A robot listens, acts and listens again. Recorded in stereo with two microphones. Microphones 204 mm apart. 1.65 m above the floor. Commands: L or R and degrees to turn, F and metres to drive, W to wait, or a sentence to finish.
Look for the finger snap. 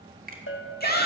R40
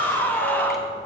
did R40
W
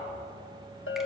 W
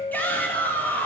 I heard a finger snap, but can't make it out now. It was about straight ahead or 100° right.